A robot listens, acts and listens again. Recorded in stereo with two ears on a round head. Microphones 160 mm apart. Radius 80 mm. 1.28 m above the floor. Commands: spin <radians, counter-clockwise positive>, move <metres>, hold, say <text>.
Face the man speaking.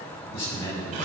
spin 0.52
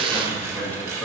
spin 0.17
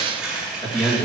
spin 0.17
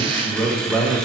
spin 0.17
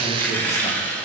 hold
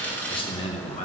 spin 0.70
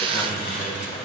hold
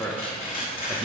say Facing the man speaking, 1 to 2 m away.